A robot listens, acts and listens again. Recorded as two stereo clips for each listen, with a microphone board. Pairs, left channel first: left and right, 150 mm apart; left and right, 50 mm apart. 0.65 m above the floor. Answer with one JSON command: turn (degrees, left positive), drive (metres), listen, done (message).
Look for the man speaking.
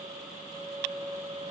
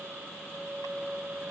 {"listen": true}
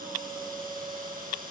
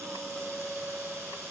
{"listen": true}
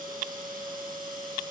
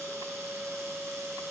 {"done": "I can't make out a man speaking."}